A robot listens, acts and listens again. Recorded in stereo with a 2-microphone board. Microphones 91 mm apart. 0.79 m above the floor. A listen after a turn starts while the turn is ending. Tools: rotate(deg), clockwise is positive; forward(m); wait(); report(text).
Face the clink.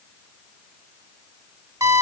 wait()
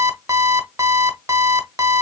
wait()
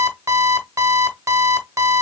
report("I can't make out a clink to turn to.")